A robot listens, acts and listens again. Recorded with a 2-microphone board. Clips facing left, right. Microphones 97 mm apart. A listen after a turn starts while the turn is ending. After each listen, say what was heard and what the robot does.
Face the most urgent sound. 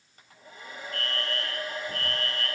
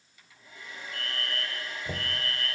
Turn 30° right.
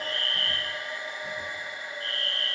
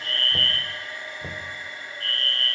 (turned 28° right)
So it is at 25° left. Turn 25° left.
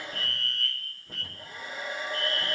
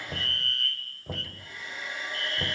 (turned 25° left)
Facing the fire alarm.